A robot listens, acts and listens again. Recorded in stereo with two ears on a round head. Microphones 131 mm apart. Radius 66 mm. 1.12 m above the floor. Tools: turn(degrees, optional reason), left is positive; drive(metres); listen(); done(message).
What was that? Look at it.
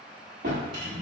turn(degrees=-60, reason="The drawer: about 60° right or 120° right.")
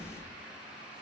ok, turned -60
turn(degrees=-20, reason="So it is at 20° right.")
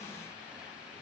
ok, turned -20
listen()
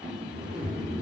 done("Found it: a drawer, straight ahead.")